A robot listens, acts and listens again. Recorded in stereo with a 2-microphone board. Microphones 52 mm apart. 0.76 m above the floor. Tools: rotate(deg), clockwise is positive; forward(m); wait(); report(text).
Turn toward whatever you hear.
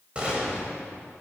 rotate(25)
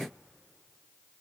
wait()
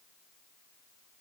report("I heard a gunshot, but can't make it out now. It was about straight ahead or 130° right.")